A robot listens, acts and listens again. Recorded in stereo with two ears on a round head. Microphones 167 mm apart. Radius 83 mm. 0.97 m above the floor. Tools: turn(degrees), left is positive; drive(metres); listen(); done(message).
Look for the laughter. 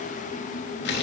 listen()
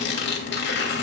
listen()
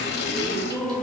turn(degrees=30)
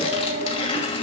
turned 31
turn(degrees=-30)
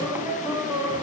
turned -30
turn(degrees=-10)
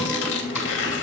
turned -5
listen()
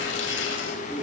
done("Found it: laughter, straight ahead, over 4 m away.")